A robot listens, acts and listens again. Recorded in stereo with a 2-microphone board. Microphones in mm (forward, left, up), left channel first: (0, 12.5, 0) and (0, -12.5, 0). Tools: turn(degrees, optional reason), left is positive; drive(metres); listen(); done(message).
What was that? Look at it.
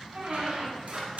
turn(degrees=-75, reason="The squeak: about 75° right or 105° right.")
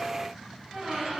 turn(degrees=-30, reason="So it is at 30° right.")
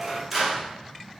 turn(degrees=-10, reason="The squeak is now 10° right.")
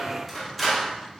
done("Facing the squeak, 2 to 4 m away.")